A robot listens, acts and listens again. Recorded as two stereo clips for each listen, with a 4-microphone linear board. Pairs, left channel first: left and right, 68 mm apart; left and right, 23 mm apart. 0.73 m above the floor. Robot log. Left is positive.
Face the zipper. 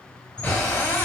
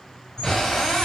note: The zipper: about 60° right or 120° right.
cmd yaw -60
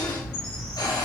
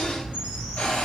note: So it is at 55° right.
cmd yaw -55
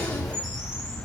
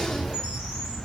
end: Found it: a zipper, straight ahead, 1 to 2 m away.